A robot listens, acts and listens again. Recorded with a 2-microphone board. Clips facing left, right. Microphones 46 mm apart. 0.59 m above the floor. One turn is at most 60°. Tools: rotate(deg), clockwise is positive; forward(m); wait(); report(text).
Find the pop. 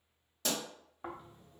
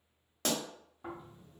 rotate(55)
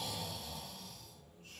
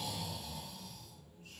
wait()
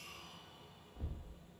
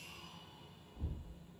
report("I heard a pop, but can't make it out now. It was about straight ahead or 70° right.")